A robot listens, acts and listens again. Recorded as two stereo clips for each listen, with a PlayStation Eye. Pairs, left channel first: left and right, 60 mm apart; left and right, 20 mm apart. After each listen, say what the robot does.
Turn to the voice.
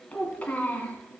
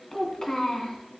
Turn 25° left.
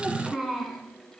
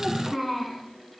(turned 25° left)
Facing the child speaking.